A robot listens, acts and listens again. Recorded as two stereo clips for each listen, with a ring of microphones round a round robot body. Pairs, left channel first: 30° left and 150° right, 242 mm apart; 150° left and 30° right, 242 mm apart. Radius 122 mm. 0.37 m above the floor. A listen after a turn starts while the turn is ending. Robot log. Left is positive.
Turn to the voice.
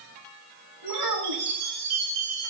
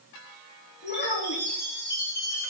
note: The child speaking: 160° right.
cmd yaw -160
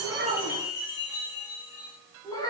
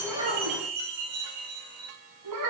note: The child speaking is now 45° right.
cmd yaw -45
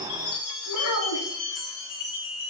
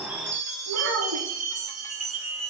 end: Facing the child speaking.